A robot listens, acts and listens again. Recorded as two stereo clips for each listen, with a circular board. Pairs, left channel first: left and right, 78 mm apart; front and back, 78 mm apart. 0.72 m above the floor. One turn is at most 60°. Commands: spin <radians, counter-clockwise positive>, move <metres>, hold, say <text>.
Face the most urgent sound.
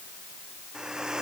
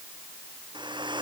hold
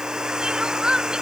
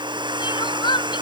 spin -0.17
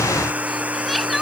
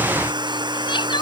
say Found it: crying, straight ahead.